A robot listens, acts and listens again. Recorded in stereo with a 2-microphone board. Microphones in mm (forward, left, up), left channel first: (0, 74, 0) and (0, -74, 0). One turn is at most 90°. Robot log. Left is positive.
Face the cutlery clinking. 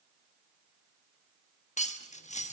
note: The cutlery clinking: about 55° left or 125° left.
cmd yaw +55
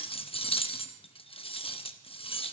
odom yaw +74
note: So it is at 45° left.
cmd yaw +45
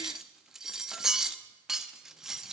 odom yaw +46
end: Found it: cutlery clinking, straight ahead, under 1 m away.